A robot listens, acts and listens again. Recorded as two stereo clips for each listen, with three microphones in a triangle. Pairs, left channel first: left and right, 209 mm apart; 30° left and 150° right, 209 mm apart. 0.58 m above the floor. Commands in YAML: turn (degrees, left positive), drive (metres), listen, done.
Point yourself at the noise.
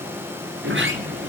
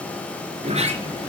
turn: -95
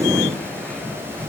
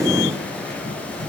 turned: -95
turn: 10
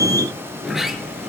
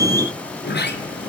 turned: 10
done: "Facing the sliding door."